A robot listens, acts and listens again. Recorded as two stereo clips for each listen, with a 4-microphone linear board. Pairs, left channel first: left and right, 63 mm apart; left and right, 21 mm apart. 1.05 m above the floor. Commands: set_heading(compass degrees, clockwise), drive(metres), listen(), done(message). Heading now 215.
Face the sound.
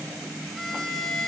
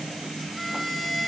set_heading(185)
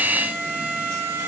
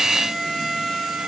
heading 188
set_heading(213)
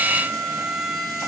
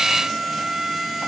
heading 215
done("Facing the violin.")